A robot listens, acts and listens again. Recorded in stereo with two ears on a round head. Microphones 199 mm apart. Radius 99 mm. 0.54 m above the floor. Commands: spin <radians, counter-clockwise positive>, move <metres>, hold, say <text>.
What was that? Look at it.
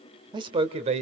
spin -0.52
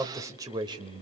spin -0.44
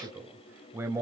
spin -0.26
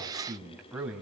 say Found it: a man speaking, straight ahead.